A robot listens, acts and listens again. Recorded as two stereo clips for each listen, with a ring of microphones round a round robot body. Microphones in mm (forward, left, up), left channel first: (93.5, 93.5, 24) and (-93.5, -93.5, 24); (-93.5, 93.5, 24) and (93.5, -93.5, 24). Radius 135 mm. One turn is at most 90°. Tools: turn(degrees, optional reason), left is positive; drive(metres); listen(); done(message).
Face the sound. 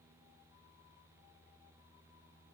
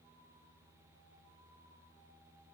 listen()
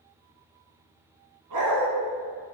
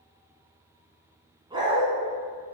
turn(degrees=-90, reason="The dog barking: 120° right.")
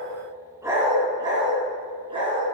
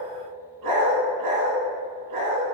turn(degrees=-65, reason="The dog barking is now 65° right.")
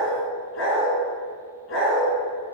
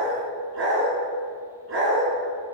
done("Facing the dog barking, 2 to 4 m away.")